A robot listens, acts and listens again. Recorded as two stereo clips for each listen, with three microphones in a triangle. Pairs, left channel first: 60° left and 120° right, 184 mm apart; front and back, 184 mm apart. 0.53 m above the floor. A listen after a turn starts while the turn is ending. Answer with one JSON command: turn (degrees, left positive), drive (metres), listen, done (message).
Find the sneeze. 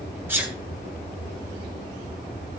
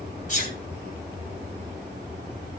{"turn": -40}
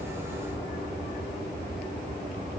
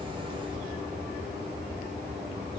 {"done": "I heard a sneeze from this way, but can't make it out now."}